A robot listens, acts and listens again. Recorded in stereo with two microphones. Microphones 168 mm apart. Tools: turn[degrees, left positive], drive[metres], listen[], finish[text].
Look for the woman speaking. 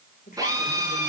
Thought: The woman speaking: about 55° left or 125° left.
Action: turn[55]
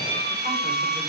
Action: listen[]
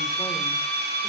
Action: listen[]
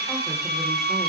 Action: finish[I heard a woman speaking, but can't make it out now. It was about straight ahead or 70° left.]